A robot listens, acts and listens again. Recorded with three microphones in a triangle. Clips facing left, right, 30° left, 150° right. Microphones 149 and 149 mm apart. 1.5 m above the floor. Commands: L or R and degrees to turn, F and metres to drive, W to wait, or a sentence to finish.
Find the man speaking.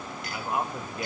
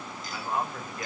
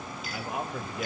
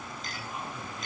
L20
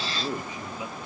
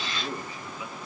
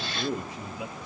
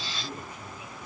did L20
L25
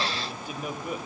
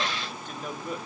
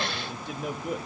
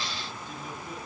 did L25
L10
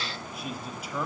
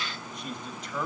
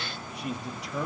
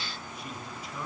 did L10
L10
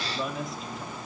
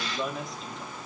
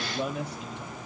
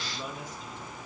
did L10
Found it: a man speaking, straight ahead.